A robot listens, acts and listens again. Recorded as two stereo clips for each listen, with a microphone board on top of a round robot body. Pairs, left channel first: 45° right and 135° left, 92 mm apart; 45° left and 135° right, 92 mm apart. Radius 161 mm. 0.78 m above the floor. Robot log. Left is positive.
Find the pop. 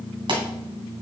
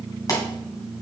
note: The pop: 100° left.
cmd yaw +100
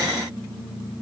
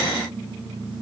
end: I heard a pop from this way, but can't make it out now.